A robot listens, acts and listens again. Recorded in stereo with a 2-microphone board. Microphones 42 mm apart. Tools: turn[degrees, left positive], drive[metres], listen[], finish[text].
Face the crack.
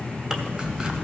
Thought: The crack: about 70° right or 110° right.
Action: turn[-70]
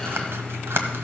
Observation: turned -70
Action: listen[]
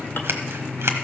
Action: finish[I heard a crack, but can't make it out now. It was about straight ahead or 40° right.]